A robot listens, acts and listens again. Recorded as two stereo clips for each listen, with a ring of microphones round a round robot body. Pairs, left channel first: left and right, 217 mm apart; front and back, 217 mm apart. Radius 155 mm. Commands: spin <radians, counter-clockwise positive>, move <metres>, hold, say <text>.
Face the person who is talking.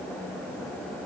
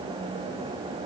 hold
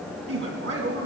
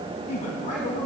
spin -1.13
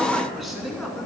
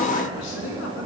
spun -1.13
say Facing the man speaking, over 4 m away.